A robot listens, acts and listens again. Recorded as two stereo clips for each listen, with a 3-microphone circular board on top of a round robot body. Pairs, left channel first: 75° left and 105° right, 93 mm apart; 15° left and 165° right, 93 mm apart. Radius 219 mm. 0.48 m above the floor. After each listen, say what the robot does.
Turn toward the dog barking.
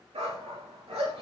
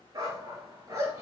Turn 110° right.
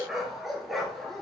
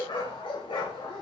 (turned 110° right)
Turn 15° right.
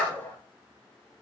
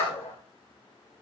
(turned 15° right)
Facing the dog barking, 2 to 4 m away.